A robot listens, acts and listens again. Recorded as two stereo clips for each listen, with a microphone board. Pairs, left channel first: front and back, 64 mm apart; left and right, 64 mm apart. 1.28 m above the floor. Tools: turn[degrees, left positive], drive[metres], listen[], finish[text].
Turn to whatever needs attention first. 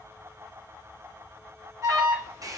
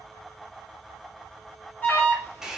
Thought: The alarm: 150° left.
Action: turn[150]
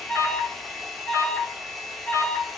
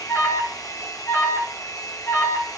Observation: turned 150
Thought: The alarm is now 45° left.
Action: turn[45]
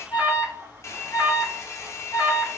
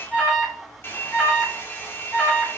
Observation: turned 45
Action: finish[Facing the alarm.]